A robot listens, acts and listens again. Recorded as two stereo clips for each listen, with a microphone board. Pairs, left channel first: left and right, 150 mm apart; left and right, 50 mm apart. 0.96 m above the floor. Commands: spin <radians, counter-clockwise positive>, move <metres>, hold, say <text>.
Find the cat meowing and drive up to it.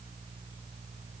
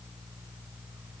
hold
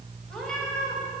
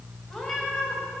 spin 0.52
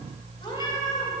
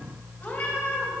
spin 2.53
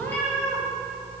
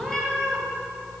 spin 0.17
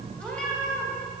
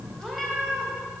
move 1.0
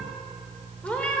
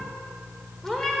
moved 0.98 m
spin 0.17
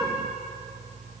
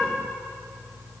move 1.0
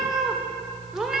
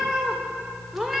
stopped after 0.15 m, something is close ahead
say I am next to the cat meowing.